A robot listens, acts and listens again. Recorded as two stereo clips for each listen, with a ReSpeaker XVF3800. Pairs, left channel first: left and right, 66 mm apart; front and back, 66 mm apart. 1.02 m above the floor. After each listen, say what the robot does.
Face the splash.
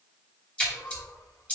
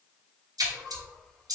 Turn 165° left.
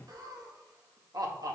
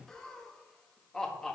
Facing where the splash came from. I can't hear it now.